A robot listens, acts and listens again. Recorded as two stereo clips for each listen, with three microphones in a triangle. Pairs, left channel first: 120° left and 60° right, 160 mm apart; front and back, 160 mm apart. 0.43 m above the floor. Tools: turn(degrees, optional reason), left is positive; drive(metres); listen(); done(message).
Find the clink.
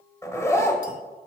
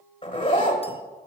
listen()
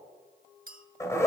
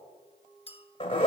turn(degrees=-45, reason="The clink: 45° right.")
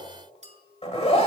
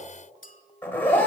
turn(degrees=-20, reason="The clink is now 20° right.")
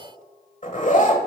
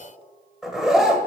listen()
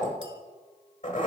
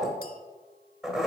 listen()
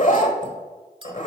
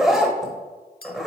done("Facing the clink.")